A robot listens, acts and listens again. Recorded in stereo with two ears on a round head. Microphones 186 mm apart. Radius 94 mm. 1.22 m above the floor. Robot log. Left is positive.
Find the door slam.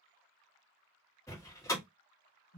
cmd yaw +30
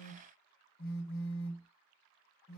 cmd idle
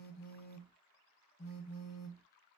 end: I heard a door slam, but can't make it out now. It was about 15° right or 135° left.